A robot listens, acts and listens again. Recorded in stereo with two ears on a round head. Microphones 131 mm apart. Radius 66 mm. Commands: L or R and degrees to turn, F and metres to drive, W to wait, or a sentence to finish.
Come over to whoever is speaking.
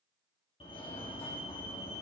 W
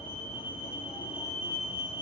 W
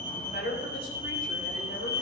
L65
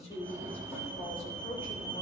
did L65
L45
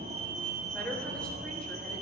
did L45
L10
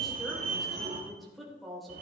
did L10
F1.0
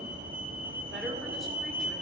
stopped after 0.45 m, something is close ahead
W
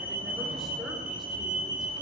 W
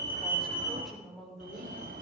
Something is in my way. I am facing the woman speaking but have not reached it.